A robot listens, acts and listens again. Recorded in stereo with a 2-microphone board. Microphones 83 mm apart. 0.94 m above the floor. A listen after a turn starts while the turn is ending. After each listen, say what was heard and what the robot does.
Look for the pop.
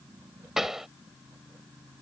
Turn 30° right.
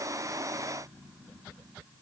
Keep listening.
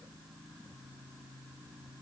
I heard a pop, but can't make it out now. It was about 25° left or 145° right.